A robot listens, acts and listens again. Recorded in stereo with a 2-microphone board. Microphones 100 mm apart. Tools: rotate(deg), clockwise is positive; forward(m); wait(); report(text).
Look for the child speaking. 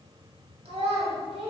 rotate(65)
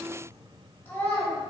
rotate(-25)
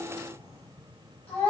rotate(-15)
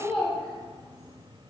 report("Found it: a child speaking, straight ahead.")